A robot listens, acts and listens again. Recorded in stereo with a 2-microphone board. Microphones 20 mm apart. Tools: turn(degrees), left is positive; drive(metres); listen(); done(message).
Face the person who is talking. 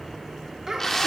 turn(degrees=-30)
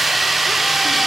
listen()
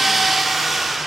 listen()
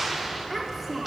done("Found it: a child speaking, straight ahead.")